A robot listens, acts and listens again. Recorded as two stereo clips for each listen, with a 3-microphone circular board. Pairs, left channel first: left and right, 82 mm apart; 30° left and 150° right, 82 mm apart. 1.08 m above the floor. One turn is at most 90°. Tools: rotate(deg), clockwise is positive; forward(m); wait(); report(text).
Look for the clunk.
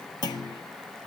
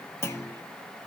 rotate(-80)
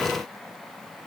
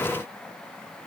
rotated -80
report("I heard a clunk from this way, but can't make it out now.")